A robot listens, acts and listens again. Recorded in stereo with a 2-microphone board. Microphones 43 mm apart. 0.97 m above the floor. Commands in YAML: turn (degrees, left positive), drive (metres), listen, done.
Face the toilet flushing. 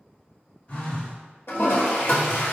turn: 90
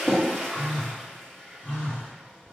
turn: 10
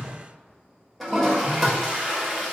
done: "Found it: a toilet flushing, straight ahead."